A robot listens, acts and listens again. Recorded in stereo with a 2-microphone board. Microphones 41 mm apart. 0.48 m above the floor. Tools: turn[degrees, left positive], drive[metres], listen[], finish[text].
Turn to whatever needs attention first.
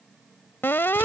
Thought: The alarm: about 70° left or 110° left.
Action: turn[70]
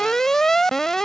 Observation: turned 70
Thought: So it is at 10° left.
Action: turn[10]
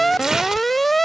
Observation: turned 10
Action: finish[Facing the alarm.]